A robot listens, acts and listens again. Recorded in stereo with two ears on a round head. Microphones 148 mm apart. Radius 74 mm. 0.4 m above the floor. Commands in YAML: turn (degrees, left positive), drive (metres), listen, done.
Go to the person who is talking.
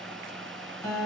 listen: true
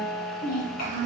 turn: 60
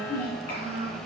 turn: 60
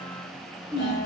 turn: 25
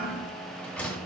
listen: true
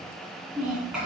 drive: 1.0
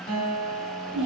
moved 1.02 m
turn: -10
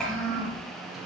drive: 1.0
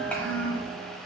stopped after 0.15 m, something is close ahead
turn: 10
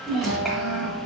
done: "I am next to the child speaking."